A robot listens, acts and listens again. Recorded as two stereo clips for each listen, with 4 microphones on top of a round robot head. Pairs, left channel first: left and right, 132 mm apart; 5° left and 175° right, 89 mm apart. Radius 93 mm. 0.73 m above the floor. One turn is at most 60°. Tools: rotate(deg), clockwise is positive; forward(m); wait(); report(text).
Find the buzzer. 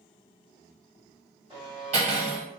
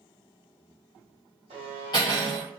rotate(60)
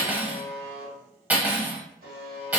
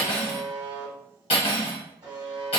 rotate(60)
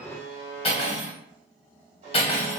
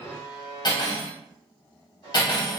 rotate(60)
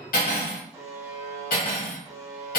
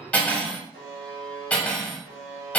rotate(20)
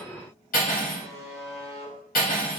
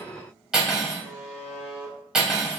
report("Found it: a buzzer, straight ahead, 1 to 2 m away.")